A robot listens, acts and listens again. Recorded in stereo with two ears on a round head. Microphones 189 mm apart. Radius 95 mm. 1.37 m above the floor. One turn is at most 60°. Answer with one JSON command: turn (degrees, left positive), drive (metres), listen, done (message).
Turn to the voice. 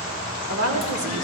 {"turn": -60}
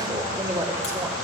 {"turn": -20}
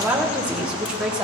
{"done": "Found it: a woman speaking, straight ahead, 2 to 4 m away."}